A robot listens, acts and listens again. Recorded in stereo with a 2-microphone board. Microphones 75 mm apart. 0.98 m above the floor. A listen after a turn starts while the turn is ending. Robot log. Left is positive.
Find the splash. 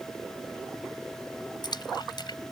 note: The splash: about 75° left or 105° left.
cmd yaw +75
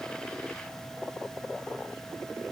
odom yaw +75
cmd idle
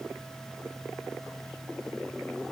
end: I heard a splash, but can't make it out now. It was about straight ahead or 30° left.